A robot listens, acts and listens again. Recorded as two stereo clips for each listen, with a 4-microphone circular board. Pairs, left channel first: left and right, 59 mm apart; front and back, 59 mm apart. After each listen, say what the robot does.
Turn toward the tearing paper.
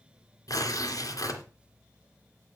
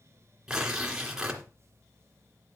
Turn 100° left.
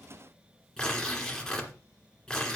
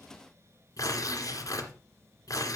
Turn 10° left.
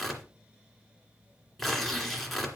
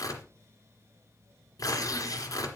Found it: tearing paper, straight ahead.